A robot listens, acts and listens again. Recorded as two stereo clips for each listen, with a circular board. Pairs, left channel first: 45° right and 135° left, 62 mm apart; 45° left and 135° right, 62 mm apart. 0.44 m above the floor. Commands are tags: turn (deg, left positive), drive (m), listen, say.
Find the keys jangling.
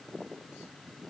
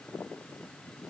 <listen/>
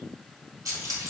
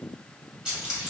<turn deg="150"/>
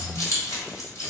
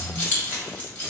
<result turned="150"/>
<turn deg="-15"/>
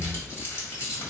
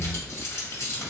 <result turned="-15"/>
<say>Found it: keys jangling, straight ahead, 1 to 2 m away.</say>